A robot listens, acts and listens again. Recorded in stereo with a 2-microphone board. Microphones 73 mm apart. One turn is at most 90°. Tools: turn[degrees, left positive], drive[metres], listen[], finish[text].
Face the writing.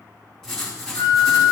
Action: turn[30]
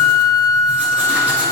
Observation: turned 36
Action: listen[]
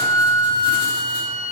Action: listen[]
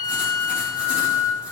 Action: finish[I heard writing, but can't make it out now. It was about 25° right or 135° left.]